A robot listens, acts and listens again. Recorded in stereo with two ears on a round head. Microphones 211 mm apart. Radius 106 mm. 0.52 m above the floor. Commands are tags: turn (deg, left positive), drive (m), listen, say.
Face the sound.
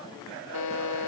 <turn deg="90"/>
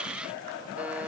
<listen/>
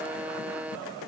<say>Found it: a buzzer, straight ahead.</say>